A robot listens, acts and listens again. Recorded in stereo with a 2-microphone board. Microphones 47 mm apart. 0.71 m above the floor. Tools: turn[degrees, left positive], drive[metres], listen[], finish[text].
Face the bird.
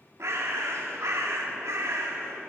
Thought: The bird: about 65° right or 115° right.
Action: turn[-65]
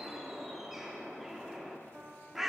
Action: finish[Found it: a bird, straight ahead.]